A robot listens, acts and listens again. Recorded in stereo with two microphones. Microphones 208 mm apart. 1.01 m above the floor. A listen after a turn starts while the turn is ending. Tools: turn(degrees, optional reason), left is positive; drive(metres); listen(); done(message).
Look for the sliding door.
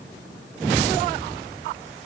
listen()
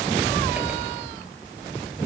listen()
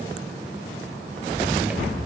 done("I can't make out a sliding door.")